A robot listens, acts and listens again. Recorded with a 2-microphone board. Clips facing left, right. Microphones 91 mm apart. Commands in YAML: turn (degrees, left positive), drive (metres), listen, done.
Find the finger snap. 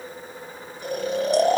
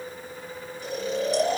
listen: true
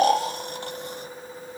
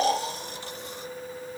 listen: true
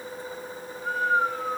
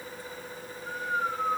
done: "I can't make out a finger snap, only snoring."